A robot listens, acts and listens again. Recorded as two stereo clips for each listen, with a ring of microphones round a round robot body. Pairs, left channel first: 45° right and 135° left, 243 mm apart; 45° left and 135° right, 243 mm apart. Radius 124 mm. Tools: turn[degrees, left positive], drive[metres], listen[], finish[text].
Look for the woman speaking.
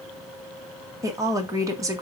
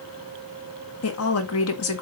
Thought: The woman speaking: 60° left.
Action: turn[60]
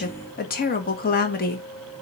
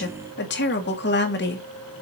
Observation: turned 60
Action: finish[Found it: a woman speaking, straight ahead, 1 to 2 m away.]